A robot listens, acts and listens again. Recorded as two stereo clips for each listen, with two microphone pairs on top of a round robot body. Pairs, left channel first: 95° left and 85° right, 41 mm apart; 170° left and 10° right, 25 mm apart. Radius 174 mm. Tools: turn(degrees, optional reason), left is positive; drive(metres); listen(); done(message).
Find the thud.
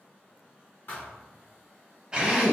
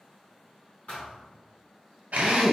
turn(degrees=140, reason="The thud: 140° left.")
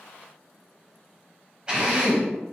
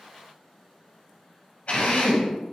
done("I heard a thud from this way, but can't make it out now.")